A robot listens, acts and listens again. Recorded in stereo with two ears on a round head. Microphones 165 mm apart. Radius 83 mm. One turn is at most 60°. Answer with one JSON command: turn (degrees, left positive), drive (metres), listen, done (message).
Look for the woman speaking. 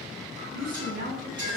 {"turn": -50}
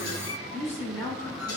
{"turn": 15}
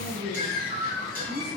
{"turn": 20}
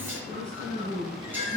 {"done": "Found it: a woman speaking, straight ahead."}